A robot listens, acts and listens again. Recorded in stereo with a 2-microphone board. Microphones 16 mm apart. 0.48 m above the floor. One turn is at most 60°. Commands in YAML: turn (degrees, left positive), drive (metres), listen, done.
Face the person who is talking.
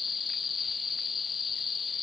listen: true
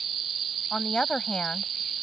turn: 60
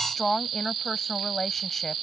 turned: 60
turn: 20
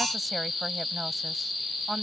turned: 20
listen: true
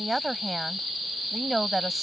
done: "Found it: a woman speaking, straight ahead."